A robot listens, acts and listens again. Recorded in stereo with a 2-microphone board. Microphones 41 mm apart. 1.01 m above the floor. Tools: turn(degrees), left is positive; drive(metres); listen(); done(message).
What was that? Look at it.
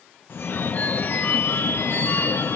turn(degrees=55)
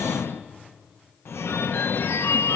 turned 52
turn(degrees=70)
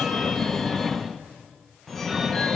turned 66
done("Found it: a phone ringing, straight ahead, under 1 m away.")